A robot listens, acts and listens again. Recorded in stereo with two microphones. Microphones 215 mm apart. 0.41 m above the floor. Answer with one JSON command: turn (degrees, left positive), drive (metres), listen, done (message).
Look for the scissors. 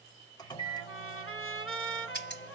{"turn": 55}
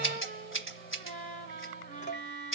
{"turn": 70}
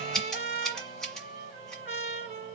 {"done": "Found it: scissors, straight ahead, 1 to 2 m away."}